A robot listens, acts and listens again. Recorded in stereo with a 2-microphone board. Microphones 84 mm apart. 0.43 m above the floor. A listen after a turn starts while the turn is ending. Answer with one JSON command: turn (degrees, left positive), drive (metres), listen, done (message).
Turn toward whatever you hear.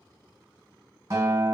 {"turn": -45}
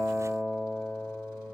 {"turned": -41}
{"done": "Found it: a guitar, straight ahead."}